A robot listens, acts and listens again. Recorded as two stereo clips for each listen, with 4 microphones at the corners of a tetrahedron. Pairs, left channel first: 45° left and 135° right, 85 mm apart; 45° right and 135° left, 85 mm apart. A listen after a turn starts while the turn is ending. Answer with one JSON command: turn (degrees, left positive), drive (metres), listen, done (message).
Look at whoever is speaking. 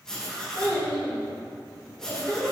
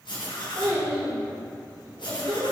{"turn": 115}
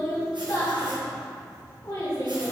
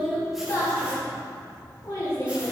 {"done": "Facing the child speaking."}